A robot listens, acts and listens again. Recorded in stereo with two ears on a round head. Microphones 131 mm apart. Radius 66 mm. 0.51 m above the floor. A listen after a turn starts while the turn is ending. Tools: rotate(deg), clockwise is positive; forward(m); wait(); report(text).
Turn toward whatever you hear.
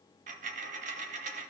rotate(50)
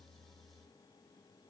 wait()
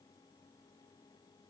report("I heard a dropped coin, but can't make it out now. It was about straight ahead or 80° right.")